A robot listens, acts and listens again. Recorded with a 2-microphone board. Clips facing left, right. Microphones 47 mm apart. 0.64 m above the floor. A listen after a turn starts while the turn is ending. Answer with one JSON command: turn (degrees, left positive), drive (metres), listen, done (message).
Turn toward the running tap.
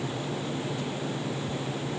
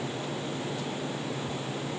{"listen": true}
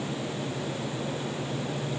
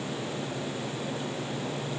{"listen": true}
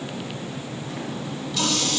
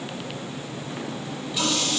{"turn": -15}
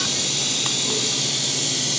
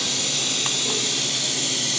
{"turn": -150}
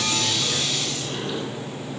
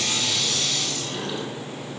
{"turn": 15}
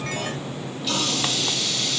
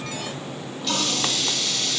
{"done": "Facing the running tap, 2 to 4 m away."}